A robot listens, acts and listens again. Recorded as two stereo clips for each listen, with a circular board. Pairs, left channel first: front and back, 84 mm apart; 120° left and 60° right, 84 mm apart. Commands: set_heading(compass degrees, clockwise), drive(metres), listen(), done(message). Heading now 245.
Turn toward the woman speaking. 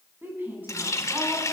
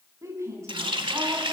set_heading(0)
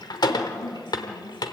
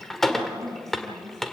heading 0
set_heading(15)
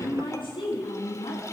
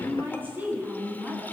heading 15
set_heading(5)
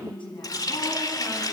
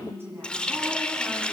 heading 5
done("Facing the woman speaking, over 4 m away.")